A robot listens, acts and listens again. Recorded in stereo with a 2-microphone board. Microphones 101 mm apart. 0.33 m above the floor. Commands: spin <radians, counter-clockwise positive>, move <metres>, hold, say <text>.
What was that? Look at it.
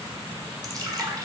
spin -0.70
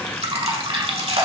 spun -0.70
spin -1.75
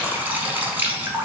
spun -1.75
spin -0.35
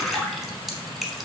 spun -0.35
say Facing the dripping, under 1 m away.